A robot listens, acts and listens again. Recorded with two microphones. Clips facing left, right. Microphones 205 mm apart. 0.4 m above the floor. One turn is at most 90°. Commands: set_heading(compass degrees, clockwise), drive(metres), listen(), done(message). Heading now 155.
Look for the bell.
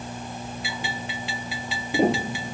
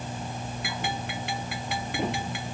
set_heading(215)
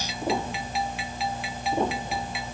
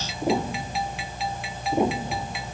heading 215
done("Found it: a bell, straight ahead.")